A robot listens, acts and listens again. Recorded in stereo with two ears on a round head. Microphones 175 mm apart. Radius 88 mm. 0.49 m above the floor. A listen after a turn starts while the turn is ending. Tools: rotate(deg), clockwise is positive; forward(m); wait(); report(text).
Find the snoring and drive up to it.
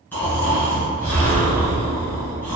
rotate(-30)
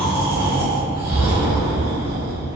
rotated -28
rotate(20)
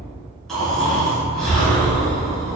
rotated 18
forward(1.0)
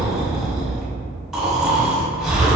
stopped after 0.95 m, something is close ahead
report("Arrived at the snoring, straight ahead.")